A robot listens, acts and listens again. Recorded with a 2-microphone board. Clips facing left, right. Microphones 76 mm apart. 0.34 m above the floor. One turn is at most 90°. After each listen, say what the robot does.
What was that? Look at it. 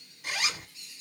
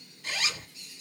Turn 30° left.
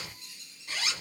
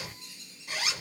Turn 15° right.
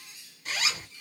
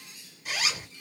Found it: a zipper, straight ahead, under 1 m away.